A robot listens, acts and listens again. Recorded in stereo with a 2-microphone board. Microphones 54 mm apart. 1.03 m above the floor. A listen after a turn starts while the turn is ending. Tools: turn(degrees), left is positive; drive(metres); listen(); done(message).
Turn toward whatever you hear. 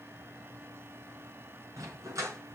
turn(degrees=-90)
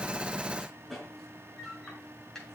turn(degrees=10)
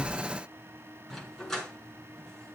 done("Found it: a dog barking, straight ahead.")